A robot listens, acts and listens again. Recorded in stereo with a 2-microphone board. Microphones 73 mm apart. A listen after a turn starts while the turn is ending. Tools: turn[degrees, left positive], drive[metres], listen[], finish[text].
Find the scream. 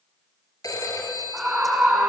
Action: turn[-30]
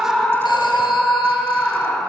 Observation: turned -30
Thought: So it is at 20° left.
Action: turn[20]
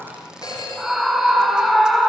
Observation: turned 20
Action: finish[Found it: a scream, straight ahead.]